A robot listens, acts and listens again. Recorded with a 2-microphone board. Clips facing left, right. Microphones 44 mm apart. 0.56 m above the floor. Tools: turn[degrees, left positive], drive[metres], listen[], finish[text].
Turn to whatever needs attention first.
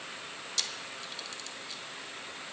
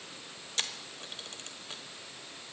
Action: listen[]
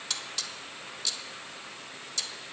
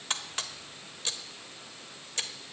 Action: listen[]
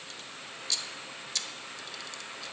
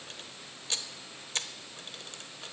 Action: finish[I can't make out anything urgent, only a camera shutter.]